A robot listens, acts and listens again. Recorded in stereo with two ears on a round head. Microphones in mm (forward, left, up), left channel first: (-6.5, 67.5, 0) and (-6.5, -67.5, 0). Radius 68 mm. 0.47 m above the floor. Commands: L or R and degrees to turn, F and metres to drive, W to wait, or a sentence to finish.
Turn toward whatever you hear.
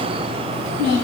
R90
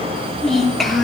Facing the child speaking.